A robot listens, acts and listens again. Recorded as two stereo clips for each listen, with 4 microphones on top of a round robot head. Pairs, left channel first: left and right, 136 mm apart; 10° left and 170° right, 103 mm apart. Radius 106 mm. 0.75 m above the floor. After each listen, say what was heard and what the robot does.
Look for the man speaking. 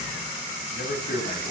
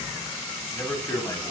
The man speaking: 75° left. Turn 75° left.
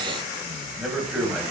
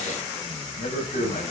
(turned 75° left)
Facing the man speaking, over 4 m away.